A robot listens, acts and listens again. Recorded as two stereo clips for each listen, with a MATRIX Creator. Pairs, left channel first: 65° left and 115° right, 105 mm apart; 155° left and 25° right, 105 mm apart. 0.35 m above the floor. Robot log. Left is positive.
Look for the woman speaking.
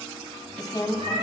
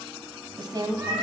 note: The woman speaking: 25° left.
cmd yaw +25
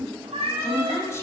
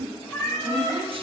end: Found it: a woman speaking, straight ahead, 2 to 4 m away.